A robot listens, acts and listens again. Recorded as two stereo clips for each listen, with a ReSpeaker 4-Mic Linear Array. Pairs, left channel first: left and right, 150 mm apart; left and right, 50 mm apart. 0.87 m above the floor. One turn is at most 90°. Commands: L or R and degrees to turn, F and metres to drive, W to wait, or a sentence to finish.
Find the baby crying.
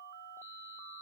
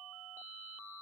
W
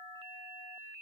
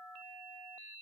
W
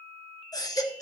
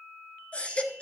L25
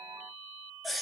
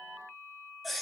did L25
Facing the baby crying.